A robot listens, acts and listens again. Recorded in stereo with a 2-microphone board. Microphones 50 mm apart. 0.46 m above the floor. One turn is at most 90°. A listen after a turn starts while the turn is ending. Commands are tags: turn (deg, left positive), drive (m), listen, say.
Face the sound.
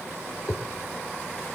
<turn deg="90"/>
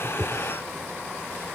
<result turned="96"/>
<listen/>
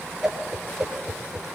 <turn deg="-10"/>
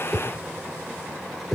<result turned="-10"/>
<say>Found it: a whoosh, straight ahead.</say>